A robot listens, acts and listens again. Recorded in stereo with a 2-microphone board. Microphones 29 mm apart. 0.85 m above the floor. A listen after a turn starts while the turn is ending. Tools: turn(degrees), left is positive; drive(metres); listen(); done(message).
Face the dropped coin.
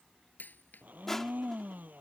turn(degrees=70)
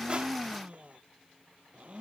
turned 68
listen()
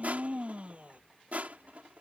done("I heard a dropped coin, but can't make it out now. It was about 5° left or 40° left.")